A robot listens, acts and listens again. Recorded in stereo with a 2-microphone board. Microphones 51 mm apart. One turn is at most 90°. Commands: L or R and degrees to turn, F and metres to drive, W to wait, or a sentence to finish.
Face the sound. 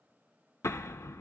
L75
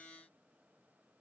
W
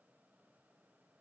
I heard an explosion, but can't make it out now. It was about straight ahead or 30° left.